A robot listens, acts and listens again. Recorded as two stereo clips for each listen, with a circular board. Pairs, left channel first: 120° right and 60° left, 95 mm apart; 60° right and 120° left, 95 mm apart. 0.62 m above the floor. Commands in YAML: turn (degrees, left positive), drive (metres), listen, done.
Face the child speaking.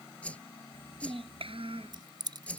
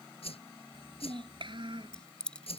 turn: 80
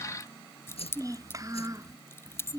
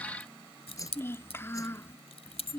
done: "Found it: a child speaking, straight ahead."